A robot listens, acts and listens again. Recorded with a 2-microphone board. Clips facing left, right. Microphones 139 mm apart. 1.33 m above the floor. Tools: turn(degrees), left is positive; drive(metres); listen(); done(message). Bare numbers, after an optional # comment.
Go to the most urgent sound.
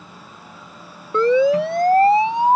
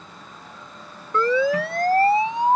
# The siren: about 25° left or 155° left.
turn(25)
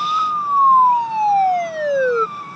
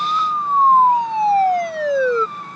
drive(1.0)
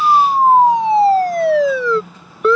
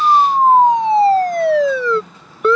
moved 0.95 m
drive(1.0)
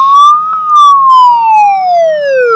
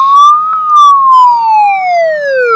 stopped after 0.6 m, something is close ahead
# The siren is now 10° left.
turn(10)
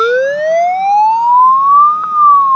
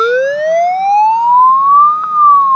done("I am next to the siren.")